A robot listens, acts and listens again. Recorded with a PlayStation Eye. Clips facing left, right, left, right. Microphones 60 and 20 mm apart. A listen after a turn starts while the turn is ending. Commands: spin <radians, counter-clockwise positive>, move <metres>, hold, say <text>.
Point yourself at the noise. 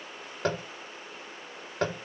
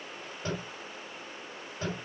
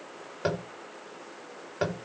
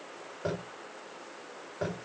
spin 1.57
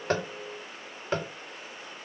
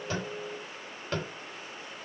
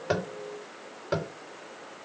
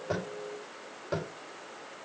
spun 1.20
spin 0.26
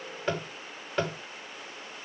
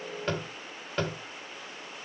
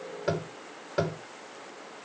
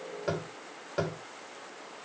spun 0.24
say Facing the tapping.